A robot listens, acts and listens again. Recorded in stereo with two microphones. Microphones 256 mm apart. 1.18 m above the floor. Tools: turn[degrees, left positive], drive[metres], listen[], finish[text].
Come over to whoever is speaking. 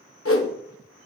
Action: listen[]
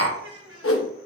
Thought: The child speaking: about 65° right or 115° right.
Action: turn[-65]
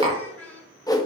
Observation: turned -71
Thought: So it is at 10° left.
Action: turn[10]
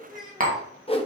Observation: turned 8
Action: drive[1.0]
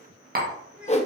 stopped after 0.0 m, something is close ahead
Action: finish[Blocked. The child speaking is further on, straight ahead.]